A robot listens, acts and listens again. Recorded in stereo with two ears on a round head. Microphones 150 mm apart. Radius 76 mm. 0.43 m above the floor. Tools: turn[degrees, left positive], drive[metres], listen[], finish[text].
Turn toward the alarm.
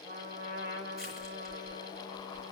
Action: listen[]
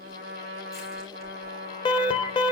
Thought: The alarm: about 30° left or 150° left.
Action: turn[30]
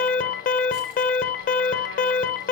Thought: So it is at 120° left.
Action: turn[120]
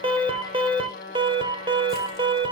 Thought: The alarm is now 30° right.
Action: turn[-30]
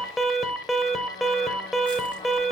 Action: finish[Found it: an alarm, straight ahead, under 1 m away.]